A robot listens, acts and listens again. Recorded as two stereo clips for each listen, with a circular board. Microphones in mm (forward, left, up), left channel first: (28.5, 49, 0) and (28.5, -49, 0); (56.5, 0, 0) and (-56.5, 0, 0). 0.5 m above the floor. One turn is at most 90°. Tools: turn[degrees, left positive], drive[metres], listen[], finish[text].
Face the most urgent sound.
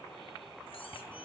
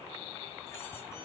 Action: listen[]
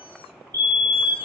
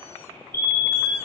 Thought: The fire alarm: 130° right.
Action: turn[-90]
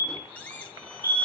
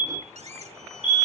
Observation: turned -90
Thought: The fire alarm is now 35° right.
Action: turn[-35]
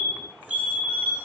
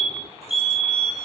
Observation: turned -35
Action: finish[Found it: a fire alarm, straight ahead, 2 to 4 m away.]